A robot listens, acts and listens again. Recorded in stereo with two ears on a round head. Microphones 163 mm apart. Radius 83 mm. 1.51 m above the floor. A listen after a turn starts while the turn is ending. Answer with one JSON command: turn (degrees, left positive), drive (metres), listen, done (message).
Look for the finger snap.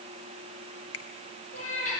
{"turn": 70}
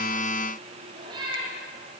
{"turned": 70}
{"listen": true}
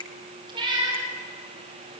{"turn": 25}
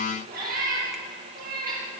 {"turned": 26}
{"listen": true}
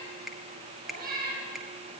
{"done": "Found it: a finger snap, straight ahead."}